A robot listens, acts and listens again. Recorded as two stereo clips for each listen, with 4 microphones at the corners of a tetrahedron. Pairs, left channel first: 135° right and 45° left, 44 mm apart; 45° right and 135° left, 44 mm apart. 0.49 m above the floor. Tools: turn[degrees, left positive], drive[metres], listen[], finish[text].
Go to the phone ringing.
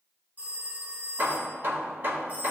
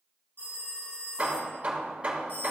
Thought: The phone ringing: 10° right.
Action: turn[-10]
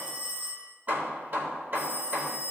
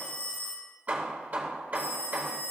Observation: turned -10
Action: drive[1.0]
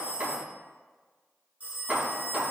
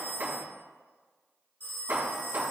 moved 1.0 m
Action: drive[1.0]
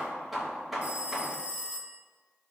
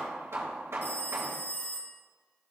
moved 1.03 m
Thought: The phone ringing is now 10° right.
Action: turn[-10]
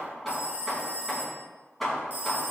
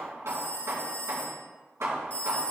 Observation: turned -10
Action: drive[1.0]
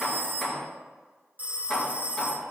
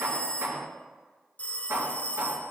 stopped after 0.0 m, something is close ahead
Action: finish[I am next to the phone ringing.]